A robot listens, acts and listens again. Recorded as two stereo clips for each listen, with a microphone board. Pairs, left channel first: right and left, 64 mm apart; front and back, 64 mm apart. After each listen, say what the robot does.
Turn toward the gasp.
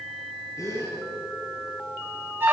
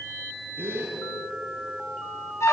Turn 125° right.
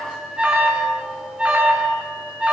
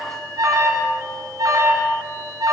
I heard a gasp from this way, but can't make it out now.